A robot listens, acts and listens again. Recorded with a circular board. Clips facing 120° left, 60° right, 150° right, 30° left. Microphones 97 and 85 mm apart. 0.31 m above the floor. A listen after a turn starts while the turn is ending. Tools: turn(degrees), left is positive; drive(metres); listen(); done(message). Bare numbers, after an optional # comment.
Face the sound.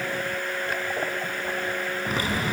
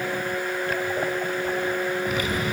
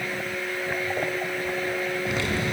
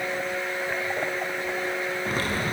# The typing on a keyboard: 70° left.
turn(70)
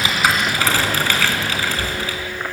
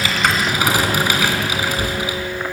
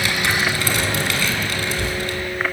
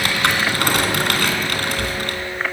# The typing on a keyboard is now 15° left.
turn(15)
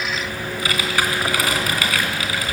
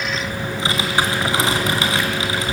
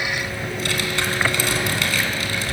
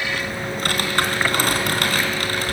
done("Found it: typing on a keyboard, straight ahead.")